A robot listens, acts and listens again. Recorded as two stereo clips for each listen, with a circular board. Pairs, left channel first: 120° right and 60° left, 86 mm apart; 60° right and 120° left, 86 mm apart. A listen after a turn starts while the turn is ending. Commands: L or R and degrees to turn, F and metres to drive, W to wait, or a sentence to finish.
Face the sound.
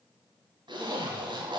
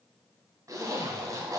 L75
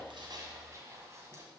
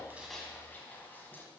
Facing the zipper, 1 to 2 m away.